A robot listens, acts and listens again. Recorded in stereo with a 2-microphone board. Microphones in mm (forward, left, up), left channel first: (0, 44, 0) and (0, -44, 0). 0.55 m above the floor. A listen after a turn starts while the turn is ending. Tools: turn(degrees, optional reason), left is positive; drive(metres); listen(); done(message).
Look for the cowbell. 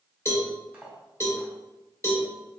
turn(degrees=30, reason="The cowbell: about 30° left or 150° left.")
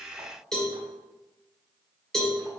done("Facing the cowbell, 1 to 2 m away.")